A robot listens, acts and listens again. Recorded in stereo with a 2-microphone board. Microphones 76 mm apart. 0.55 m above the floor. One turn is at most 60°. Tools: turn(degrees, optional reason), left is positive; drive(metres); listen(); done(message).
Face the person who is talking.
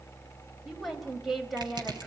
turn(degrees=30)
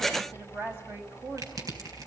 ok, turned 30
turn(degrees=-30, reason="So it is at 30° right.")
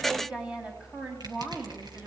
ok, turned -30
turn(degrees=-10, reason="The woman speaking is now 10° right.")
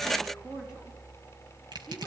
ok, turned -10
listen()
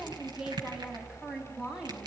done("Found it: a woman speaking, straight ahead, over 4 m away.")